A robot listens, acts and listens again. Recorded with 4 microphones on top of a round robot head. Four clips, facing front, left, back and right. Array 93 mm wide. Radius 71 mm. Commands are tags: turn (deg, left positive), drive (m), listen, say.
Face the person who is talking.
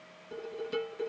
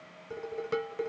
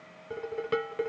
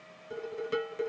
<listen/>
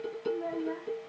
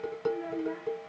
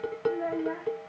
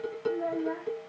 <turn deg="-155"/>
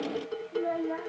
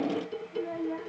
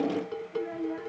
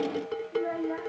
<turn deg="-45"/>
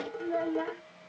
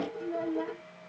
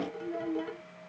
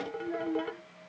<turn deg="-20"/>
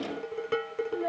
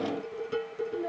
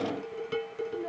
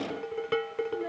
<turn deg="-10"/>
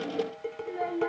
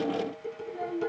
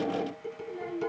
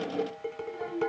<say>Facing the child speaking.</say>